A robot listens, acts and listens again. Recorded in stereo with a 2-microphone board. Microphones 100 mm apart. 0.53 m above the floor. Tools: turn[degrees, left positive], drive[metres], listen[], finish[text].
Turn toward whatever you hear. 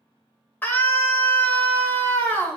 Thought: The scream: about 20° left or 160° left.
Action: turn[20]
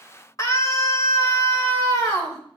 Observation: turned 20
Thought: So it is at 140° left.
Action: turn[140]
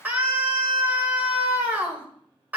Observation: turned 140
Thought: The scream is now 20° right.
Action: turn[-20]
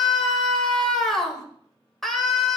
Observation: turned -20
Action: finish[Found it: a scream, straight ahead.]